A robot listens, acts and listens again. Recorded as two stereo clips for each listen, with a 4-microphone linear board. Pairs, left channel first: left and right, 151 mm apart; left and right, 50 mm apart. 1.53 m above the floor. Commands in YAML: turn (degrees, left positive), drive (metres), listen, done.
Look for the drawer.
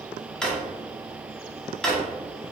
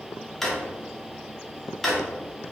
turn: 30
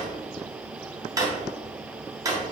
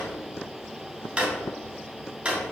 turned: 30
turn: -25
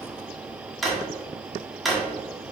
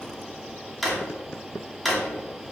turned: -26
done: "Found it: a drawer, straight ahead."